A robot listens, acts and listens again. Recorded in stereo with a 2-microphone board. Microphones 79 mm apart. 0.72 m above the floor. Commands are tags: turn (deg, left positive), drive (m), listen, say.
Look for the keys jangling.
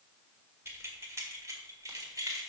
<turn deg="-50"/>
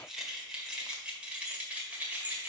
<turn deg="-20"/>
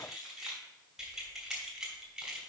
<turn deg="-10"/>
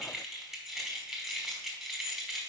<say>Facing the keys jangling.</say>